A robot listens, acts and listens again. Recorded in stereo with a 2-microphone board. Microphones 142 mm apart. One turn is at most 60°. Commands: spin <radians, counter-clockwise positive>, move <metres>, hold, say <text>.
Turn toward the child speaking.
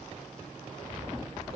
hold
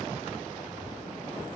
hold
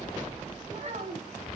spin -0.96
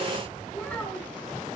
spin 0.17
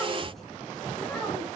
hold
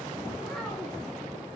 hold
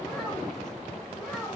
say Found it: a child speaking, straight ahead, over 4 m away.